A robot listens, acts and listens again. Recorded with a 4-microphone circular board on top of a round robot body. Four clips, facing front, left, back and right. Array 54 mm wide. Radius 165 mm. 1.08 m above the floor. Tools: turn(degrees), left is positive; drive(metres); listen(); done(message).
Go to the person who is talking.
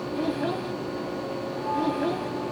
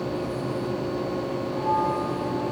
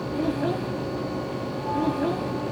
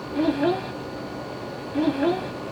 turn(degrees=-85)
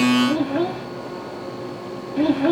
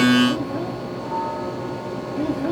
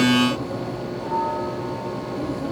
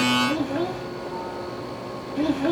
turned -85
turn(degrees=-15)
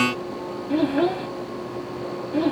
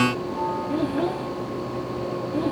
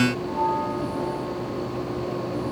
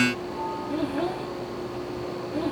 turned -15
drive(metres=1.0)
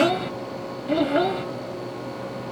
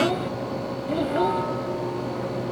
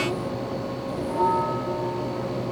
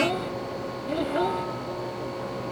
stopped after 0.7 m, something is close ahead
done("Blocked. The child speaking is further on, straight ahead.")